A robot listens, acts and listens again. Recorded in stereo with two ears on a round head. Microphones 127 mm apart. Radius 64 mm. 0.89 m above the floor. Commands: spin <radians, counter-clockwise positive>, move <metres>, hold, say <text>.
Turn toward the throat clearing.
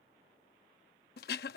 spin 1.31
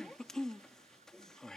say Found it: throat clearing, straight ahead.